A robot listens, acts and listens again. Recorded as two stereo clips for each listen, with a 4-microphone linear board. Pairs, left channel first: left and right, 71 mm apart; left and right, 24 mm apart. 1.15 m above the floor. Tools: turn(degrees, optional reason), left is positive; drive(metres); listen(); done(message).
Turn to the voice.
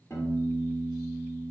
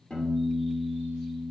listen()
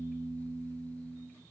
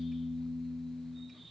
listen()
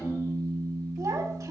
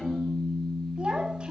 turn(degrees=-50, reason="The child speaking: about 50° right or 130° right.")
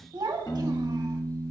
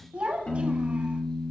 turn(degrees=-80, reason="So it is at 80° right.")
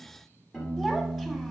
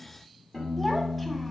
done("Found it: a child speaking, straight ahead, 1 to 2 m away.")